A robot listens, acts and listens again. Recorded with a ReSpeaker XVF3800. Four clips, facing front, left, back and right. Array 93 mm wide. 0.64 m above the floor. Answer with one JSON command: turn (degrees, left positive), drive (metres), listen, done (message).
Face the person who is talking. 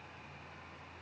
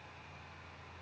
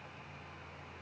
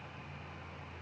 {"listen": true}
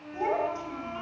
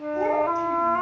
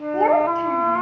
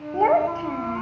{"turn": -135}
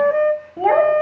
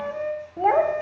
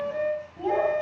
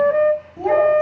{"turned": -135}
{"turn": 30}
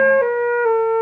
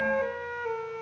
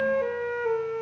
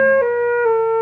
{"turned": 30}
{"listen": true}
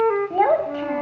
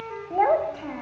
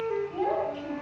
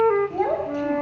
{"turn": 30}
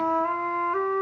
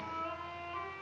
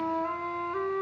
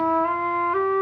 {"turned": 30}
{"listen": true}
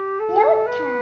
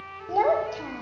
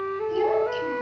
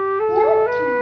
{"listen": true}
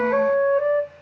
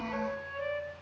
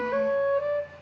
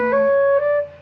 {"done": "Facing where the child speaking came from. I can't hear it now."}